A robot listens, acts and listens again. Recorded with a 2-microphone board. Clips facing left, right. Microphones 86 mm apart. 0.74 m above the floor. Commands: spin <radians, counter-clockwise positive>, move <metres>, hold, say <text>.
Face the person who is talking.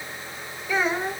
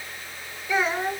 spin -0.52
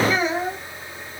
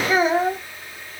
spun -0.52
spin -2.36
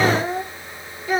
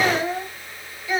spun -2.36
spin 0.79
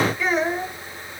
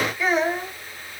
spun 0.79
say Facing the child speaking.